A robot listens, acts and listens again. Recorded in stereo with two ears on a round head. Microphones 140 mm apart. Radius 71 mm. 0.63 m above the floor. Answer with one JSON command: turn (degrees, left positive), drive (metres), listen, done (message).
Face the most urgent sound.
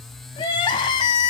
{"turn": 30}
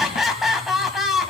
{"done": "Facing the crying."}